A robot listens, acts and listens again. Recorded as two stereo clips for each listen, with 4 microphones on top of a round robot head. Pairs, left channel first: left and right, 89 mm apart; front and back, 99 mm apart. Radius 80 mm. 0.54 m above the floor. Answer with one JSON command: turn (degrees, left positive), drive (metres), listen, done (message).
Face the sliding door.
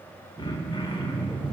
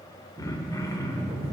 {"turn": -165}
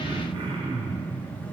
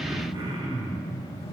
{"turn": 15}
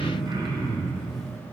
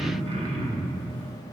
{"done": "Found it: a sliding door, straight ahead."}